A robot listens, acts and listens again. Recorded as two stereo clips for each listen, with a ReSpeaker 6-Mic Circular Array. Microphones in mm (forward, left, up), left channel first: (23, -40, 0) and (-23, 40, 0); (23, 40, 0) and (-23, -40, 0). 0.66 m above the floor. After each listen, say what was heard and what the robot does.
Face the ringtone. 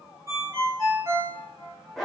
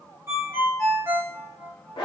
The ringtone: 175° left. Turn 175° left.
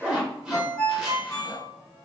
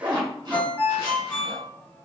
The ringtone is now 10° right. Turn 10° right.
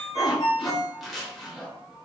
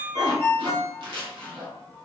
Found it: a ringtone, straight ahead, 1 to 2 m away.